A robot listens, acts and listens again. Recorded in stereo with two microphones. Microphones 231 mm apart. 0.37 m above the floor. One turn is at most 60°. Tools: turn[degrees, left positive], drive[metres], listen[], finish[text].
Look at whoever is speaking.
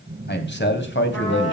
Thought: The man speaking: about 55° left or 125° left.
Action: turn[55]
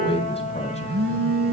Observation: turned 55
Action: listen[]
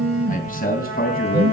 Thought: So it is at 40° left.
Action: turn[40]
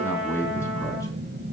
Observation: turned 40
Thought: The man speaking is now 10° left.
Action: turn[10]
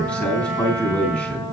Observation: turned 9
Action: finish[Found it: a man speaking, straight ahead, 2 to 4 m away.]